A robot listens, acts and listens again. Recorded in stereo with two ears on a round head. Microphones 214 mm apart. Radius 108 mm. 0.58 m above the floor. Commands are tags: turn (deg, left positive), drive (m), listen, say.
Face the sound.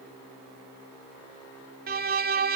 <turn deg="-40"/>
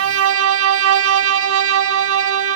<turn deg="-95"/>
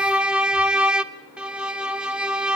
<say>Found it: a violin, straight ahead, under 1 m away.</say>